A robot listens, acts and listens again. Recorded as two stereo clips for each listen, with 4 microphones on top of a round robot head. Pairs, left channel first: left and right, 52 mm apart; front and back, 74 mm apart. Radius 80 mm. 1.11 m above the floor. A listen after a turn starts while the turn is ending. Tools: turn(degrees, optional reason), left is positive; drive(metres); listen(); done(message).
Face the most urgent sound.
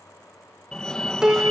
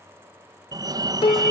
turn(degrees=170, reason="The fire alarm: 170° left.")
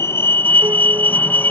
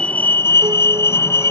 turn(degrees=45, reason="The fire alarm is now 45° left.")
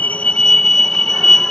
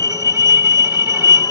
turn(degrees=10, reason="The fire alarm is now 10° left.")
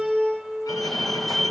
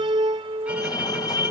done("Found it: a fire alarm, straight ahead.")